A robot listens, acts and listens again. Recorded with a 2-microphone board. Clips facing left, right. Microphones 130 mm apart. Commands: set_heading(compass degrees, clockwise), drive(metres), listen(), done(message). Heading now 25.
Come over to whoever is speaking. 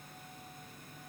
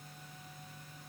listen()
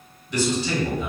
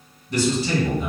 set_heading(60)
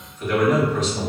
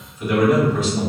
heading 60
set_heading(70)
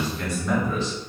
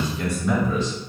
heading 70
drive(1.0)
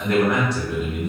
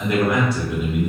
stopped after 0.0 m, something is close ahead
done("Something is in my way. I am facing the man speaking but have not reached it.")